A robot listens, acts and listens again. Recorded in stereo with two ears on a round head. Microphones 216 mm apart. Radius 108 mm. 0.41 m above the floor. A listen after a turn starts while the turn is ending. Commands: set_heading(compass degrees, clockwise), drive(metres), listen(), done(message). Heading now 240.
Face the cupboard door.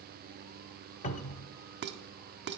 set_heading(210)
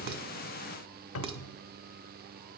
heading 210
set_heading(90)
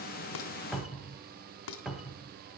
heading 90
done("Found it: a cupboard door, straight ahead.")